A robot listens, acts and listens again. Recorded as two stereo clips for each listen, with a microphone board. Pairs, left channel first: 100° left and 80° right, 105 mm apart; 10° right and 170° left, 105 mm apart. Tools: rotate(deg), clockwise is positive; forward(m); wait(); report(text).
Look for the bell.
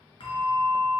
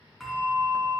rotate(-75)
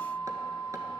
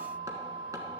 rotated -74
report("Found it: a bell, straight ahead, 2 to 4 m away.")